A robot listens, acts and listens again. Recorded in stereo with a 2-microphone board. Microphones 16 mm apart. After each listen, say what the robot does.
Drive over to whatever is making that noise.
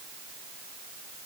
Keep listening.
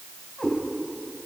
Turn 55° left.
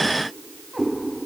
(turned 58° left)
Drive 1.0 m forward.
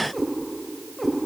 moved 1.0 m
Drive 1.0 m forward.
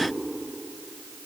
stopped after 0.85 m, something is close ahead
Keep listening.
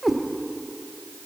I am next to the cat meowing.